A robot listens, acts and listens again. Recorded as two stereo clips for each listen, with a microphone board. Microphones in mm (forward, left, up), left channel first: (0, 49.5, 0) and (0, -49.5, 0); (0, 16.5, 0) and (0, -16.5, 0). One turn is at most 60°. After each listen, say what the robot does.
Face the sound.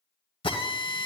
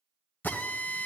Turn 60° left.
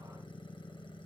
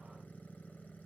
Keep listening.
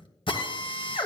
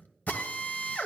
Turn 60° left.
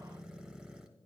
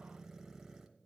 Keep listening.
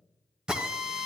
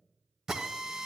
Found it: a drill, straight ahead, 1 to 2 m away.